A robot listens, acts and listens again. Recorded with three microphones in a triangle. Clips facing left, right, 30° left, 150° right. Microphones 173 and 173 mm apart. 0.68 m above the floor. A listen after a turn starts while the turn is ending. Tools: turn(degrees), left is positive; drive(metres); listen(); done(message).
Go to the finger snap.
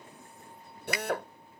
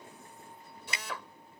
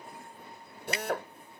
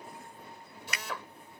turn(degrees=-30)
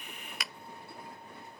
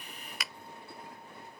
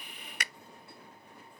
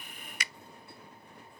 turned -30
drive(metres=1.0)
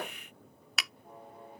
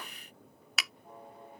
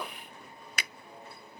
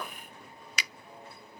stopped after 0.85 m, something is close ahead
done("I am next to the finger snap.")